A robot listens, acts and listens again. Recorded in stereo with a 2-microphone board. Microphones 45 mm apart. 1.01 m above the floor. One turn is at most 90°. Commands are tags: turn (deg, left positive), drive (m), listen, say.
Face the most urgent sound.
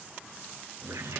<listen/>
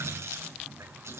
<listen/>
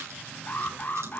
<turn deg="45"/>
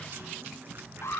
<turn deg="85"/>
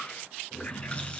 <listen/>
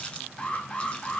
<turn deg="15"/>
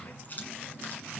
<listen/>
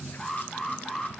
<say>Facing the alarm, 2 to 4 m away.</say>